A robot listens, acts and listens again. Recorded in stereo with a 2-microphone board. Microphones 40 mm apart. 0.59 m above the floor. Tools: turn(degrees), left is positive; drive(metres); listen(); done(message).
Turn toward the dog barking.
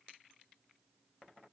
listen()
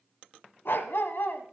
turn(degrees=65)
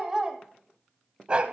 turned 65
turn(degrees=-30)
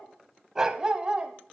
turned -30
turn(degrees=-25)
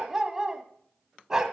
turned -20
turn(degrees=-15)
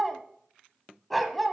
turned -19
done("Facing the dog barking, 1 to 2 m away.")